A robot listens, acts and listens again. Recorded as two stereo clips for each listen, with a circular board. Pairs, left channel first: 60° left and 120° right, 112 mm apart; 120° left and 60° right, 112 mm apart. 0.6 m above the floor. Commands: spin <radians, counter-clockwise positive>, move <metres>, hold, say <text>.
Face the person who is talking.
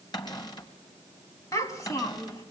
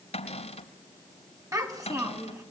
say Facing the child speaking, 2 to 4 m away.